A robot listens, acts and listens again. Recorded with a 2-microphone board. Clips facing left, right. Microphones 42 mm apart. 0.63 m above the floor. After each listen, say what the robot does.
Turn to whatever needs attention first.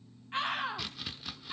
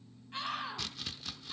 Turn 40° left.
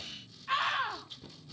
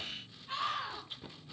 Turn 100° left.
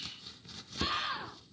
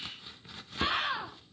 Turn 25° right.
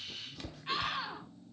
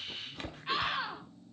Turn 10° right.
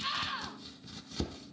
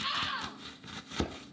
Found it: a scream, straight ahead, 2 to 4 m away.